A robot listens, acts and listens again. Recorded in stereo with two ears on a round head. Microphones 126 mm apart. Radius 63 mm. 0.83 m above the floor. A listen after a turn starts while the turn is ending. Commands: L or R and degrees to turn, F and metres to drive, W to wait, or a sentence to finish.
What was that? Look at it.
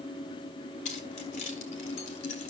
L55
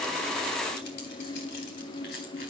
L75
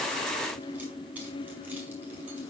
W
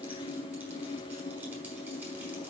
W
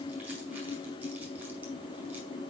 Facing where the keys jangling came from. I can't hear it now.